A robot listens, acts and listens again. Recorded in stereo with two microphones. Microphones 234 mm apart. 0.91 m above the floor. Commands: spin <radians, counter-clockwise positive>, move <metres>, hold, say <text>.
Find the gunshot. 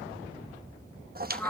hold
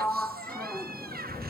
hold
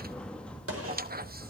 spin -1.22
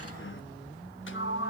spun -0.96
hold
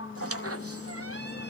say I heard a gunshot, but can't make it out now. It was about 15° right or 55° right.